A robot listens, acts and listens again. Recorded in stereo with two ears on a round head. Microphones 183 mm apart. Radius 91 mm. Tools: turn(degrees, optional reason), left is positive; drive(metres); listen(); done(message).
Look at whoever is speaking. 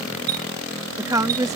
turn(degrees=-15, reason="The woman speaking: about 15° right or 165° right.")
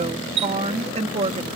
turn(degrees=-150, reason="So it is at 150° right.")
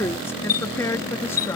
turn(degrees=15, reason="The woman speaking is now 15° left.")
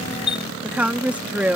done("Found it: a woman speaking, straight ahead.")